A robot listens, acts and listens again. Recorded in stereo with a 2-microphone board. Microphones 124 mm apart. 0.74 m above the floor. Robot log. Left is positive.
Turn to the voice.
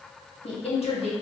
note: The woman speaking: about 55° left or 125° left.
cmd yaw +55
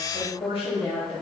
note: So it is at 55° left.
cmd yaw +55
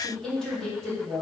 end: Found it: a woman speaking, straight ahead, 1 to 2 m away.